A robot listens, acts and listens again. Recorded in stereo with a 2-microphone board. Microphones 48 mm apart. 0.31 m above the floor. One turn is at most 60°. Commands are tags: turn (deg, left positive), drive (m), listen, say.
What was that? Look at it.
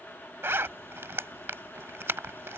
<turn deg="-55"/>
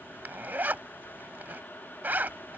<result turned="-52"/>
<turn deg="-50"/>
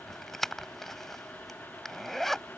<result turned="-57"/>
<say>Found it: a zipper, straight ahead.</say>